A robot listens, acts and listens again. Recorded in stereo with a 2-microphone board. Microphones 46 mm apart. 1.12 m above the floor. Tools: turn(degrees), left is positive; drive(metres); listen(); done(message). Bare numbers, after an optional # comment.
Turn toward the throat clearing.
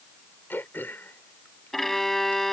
# The throat clearing: about 55° left or 125° left.
turn(55)
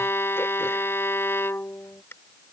# So it is at 70° left.
turn(70)
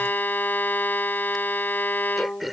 done("Facing the throat clearing.")